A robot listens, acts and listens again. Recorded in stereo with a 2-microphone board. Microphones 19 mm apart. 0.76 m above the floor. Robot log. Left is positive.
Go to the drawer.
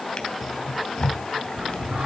note: The drawer: about 40° left or 140° left.
cmd yaw +40
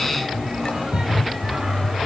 note: So it is at 95° left.
cmd yaw +95
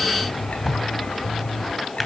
cmd fwd 1.0
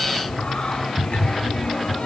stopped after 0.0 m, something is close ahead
end: Something is in my way. I am facing the drawer but have not reached it.